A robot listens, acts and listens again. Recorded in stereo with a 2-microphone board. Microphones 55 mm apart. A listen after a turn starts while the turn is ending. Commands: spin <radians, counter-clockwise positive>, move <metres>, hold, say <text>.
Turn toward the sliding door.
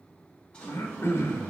spin 0.35
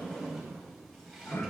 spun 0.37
say Found it: a sliding door, straight ahead.